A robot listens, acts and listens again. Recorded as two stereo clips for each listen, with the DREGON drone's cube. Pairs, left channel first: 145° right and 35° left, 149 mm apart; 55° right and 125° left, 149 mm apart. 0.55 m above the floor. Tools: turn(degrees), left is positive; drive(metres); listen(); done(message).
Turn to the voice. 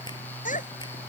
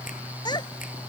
turn(degrees=-115)
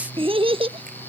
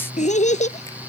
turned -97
turn(degrees=-20)
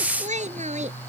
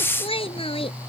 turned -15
done("Facing the child speaking.")